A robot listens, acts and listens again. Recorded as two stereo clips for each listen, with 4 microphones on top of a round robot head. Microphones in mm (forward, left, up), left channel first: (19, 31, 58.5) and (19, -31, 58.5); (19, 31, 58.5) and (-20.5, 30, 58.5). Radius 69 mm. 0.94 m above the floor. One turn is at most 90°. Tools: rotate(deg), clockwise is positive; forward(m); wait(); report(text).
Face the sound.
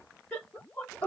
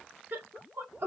rotate(-90)
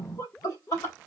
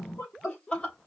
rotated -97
rotate(-65)
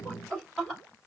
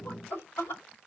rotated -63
report("Facing the laughter.")